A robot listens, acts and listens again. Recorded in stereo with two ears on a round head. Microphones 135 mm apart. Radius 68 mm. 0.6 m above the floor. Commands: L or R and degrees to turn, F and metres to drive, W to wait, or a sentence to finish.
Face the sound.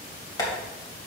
L25
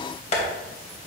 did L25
L125
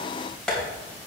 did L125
Facing the tapping, 2 to 4 m away.